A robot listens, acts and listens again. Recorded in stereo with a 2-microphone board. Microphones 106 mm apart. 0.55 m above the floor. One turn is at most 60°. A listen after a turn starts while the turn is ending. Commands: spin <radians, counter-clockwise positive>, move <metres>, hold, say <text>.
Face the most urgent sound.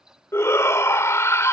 spin 0.44
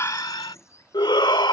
spin 1.05
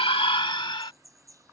spin 1.05
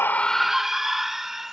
say Found it: a shout, straight ahead.